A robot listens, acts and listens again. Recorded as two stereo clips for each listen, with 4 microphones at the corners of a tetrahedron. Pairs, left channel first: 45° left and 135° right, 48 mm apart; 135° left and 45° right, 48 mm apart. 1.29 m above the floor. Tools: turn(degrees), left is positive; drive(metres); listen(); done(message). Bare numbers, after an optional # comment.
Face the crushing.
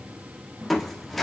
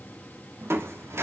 # The crushing: 40° right.
turn(-40)
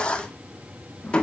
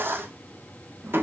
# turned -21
# The crushing is now 20° right.
turn(-20)
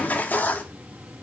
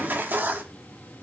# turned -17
done("Found it: crushing, straight ahead.")